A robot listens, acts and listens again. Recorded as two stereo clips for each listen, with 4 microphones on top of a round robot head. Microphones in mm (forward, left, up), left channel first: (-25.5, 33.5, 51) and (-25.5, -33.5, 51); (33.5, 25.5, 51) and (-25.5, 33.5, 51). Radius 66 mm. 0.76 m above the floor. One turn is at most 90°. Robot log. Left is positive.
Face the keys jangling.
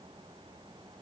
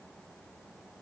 cmd idle
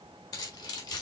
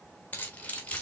note: The keys jangling: 60° left.
cmd yaw +60
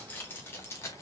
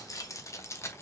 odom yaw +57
note: The keys jangling is now 35° left.
cmd yaw +35
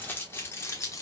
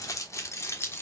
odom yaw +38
note: The keys jangling is now 40° left.
cmd yaw +40
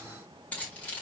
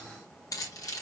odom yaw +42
note: The keys jangling is now 20° left.
cmd yaw +20
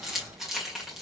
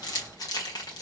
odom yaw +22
end: Found it: keys jangling, straight ahead.